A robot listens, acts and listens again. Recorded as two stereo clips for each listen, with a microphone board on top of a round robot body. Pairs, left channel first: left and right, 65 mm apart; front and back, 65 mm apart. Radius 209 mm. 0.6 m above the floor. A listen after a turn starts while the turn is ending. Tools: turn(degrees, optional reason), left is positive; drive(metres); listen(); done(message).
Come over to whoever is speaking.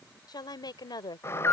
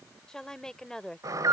turn(degrees=80, reason="The woman speaking: 80° left.")
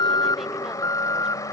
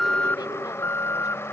listen()
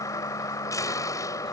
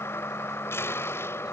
listen()
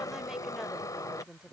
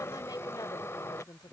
turn(degrees=-10, reason="The woman speaking is now 10° right.")
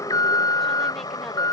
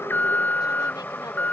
listen()
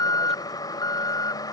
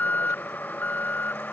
listen()
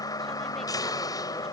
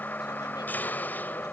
done("I heard a woman speaking from this way, but can't make it out now. I did not reach it.")